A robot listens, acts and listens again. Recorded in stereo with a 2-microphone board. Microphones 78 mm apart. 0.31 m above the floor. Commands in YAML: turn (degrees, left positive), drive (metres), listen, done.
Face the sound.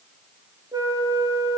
turn: -55
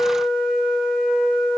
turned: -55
done: "Found it: a flute, straight ahead, over 4 m away."